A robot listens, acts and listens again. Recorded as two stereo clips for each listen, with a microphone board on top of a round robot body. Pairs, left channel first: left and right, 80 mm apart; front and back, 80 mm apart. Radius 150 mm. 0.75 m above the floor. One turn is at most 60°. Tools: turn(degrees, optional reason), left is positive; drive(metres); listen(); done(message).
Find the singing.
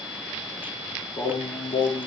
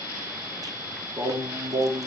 turn(degrees=60, reason="The singing: 125° left.")
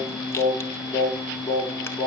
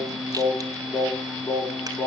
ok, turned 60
turn(degrees=45, reason="The singing is now 45° left.")
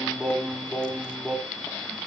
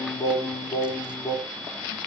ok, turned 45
done("Found it: singing, straight ahead.")